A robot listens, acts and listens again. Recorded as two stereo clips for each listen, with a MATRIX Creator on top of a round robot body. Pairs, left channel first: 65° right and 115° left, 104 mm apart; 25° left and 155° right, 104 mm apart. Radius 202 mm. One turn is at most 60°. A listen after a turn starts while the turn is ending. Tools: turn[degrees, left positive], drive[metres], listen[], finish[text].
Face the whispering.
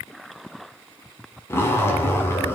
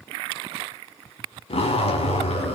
Action: listen[]
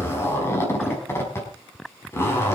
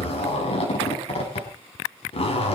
Action: listen[]
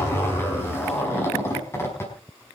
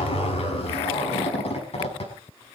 Action: finish[I can't make out whispering to turn to.]